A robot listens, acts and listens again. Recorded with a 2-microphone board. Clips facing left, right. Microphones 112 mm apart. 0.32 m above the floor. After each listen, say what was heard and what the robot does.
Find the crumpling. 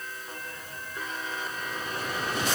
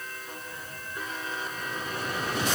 Keep listening.
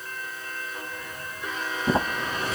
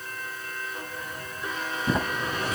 The crumpling: about 30° left or 150° left. Turn 30° left.
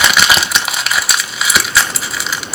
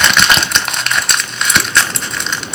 Facing the crumpling.